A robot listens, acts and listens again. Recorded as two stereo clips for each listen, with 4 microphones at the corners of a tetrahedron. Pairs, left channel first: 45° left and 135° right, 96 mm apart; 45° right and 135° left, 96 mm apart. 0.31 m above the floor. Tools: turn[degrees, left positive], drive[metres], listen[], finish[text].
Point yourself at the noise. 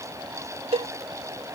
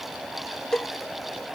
Thought: The cowbell: 130° right.
Action: turn[-130]
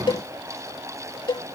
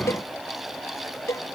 Thought: The cowbell is now 10° left.
Action: turn[10]
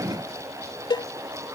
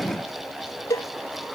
Action: finish[Found it: a cowbell, straight ahead.]